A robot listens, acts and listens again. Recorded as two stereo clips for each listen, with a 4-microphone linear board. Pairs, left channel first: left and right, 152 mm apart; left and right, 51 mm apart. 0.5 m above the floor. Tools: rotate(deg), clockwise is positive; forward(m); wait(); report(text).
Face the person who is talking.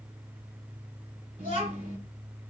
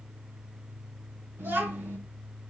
rotate(60)
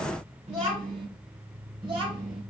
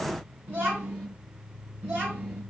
rotate(40)
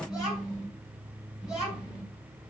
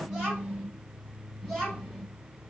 report("Found it: a child speaking, straight ahead, 2 to 4 m away.")